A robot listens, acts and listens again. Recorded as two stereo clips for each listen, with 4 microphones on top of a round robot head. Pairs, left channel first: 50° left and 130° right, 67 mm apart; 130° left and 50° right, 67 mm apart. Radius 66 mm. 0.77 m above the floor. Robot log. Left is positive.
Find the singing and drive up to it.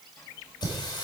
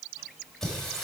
note: The singing: 50° left.
cmd yaw +50
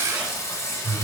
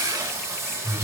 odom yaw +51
cmd fwd 1.0
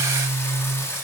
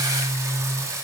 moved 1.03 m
cmd fwd 1.0
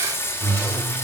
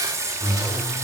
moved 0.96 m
cmd fwd 1.0
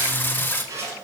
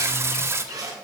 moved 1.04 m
note: The singing is now 10° right.
cmd yaw -10
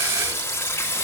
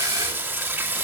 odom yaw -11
cmd fwd 1.0
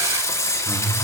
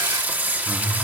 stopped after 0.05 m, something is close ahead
note: The singing is now 10° left.
cmd yaw +10
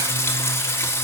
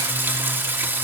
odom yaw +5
end: I am next to the singing.